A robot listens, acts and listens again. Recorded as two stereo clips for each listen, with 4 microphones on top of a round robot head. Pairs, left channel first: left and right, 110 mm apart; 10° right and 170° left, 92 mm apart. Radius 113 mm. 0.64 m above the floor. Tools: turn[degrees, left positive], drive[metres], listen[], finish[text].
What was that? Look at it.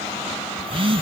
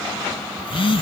Thought: The phone buzzing: 45° right.
Action: turn[-45]
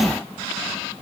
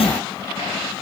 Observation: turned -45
Action: finish[Facing the phone buzzing.]